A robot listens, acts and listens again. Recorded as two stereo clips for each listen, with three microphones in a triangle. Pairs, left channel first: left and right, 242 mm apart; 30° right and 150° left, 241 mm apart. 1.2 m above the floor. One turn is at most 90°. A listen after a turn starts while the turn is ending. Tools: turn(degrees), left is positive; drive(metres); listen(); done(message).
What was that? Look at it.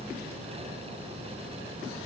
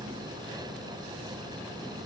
listen()
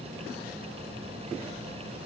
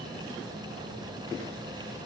listen()
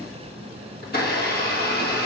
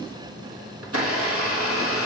turn(degrees=90)
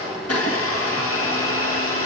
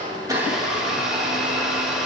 turn(degrees=60)
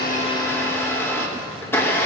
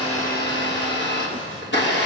turn(degrees=10)
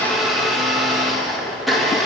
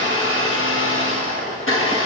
done("Found it: a blender, straight ahead, 1 to 2 m away.")